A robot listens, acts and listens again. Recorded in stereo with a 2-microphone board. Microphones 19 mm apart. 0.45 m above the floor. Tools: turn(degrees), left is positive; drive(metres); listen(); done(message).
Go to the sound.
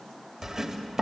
turn(degrees=-30)
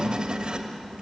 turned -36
turn(degrees=-110)
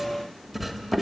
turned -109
drive(metres=1.0)
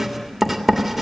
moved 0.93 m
turn(degrees=-10)
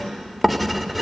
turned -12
drive(metres=1.0)
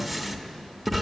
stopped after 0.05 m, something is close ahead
done("I am next to the writing.")